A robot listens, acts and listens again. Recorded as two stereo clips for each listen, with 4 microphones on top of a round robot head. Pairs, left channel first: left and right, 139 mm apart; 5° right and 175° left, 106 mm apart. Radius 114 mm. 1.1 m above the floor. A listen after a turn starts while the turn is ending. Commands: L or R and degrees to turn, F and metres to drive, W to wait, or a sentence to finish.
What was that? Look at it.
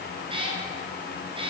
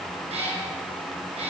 R145
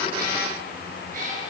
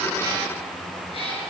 R55
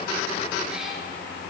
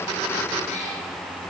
Facing the cat meowing, over 4 m away.